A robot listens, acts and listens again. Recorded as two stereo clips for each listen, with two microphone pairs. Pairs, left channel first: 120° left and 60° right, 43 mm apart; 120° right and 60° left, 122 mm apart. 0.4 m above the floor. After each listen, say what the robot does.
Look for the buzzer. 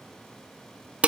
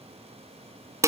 Keep listening.
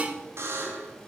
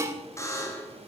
Turn 55° right.
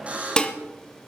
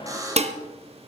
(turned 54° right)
Facing the buzzer, 2 to 4 m away.